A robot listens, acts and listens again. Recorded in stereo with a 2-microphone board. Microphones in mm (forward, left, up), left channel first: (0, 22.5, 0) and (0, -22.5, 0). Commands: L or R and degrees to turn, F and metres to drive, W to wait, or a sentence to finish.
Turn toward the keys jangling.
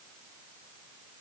W
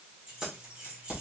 R25
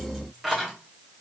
R30
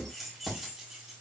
Found it: keys jangling, straight ahead.